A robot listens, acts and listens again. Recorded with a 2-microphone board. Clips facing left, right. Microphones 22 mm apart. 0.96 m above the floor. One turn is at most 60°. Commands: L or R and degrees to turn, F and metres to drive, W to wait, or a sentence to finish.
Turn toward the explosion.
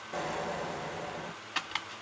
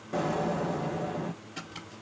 L30
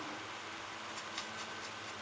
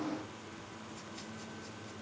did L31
W
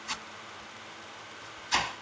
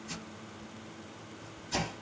I heard an explosion, but can't make it out now. It was about 30° right or 150° left.